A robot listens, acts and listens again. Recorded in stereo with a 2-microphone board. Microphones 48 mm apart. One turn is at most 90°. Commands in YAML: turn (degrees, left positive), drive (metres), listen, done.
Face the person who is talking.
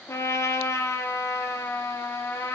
listen: true
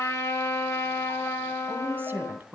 turn: -45
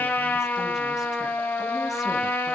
listen: true
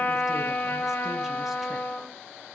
listen: true
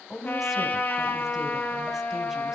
done: "Facing the woman speaking."